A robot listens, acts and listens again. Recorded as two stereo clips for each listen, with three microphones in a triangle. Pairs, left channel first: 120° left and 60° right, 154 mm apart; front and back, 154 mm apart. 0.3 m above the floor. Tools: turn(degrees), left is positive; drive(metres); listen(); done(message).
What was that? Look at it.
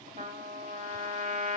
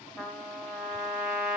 turn(degrees=-95)
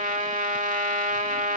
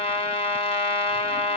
turn(degrees=-45)
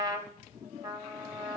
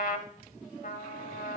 done("Facing the trumpet, under 1 m away.")